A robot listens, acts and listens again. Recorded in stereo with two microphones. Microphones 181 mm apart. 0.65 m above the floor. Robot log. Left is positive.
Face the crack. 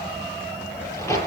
note: The crack: about 15° left or 165° left.
cmd yaw +15
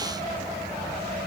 cmd idle
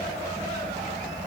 end: I heard a crack, but can't make it out now. It was about straight ahead or 150° left.